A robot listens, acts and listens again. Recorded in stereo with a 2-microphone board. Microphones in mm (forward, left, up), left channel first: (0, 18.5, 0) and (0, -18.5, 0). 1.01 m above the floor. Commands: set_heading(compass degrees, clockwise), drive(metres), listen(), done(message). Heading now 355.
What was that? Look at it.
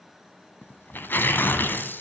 set_heading(300)
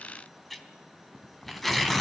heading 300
done("Facing the tearing paper, 2 to 4 m away.")